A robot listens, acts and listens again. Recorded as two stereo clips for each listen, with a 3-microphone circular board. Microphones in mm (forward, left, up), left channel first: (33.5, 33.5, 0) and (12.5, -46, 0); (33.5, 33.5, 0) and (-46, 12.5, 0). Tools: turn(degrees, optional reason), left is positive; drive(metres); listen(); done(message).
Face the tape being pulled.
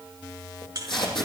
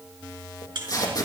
turn(degrees=65, reason="The tape being pulled: 65° left.")
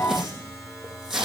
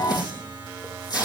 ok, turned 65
turn(degrees=-20, reason="The tape being pulled is now 20° right.")
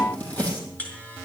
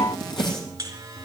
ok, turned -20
done("Facing the tape being pulled, over 4 m away.")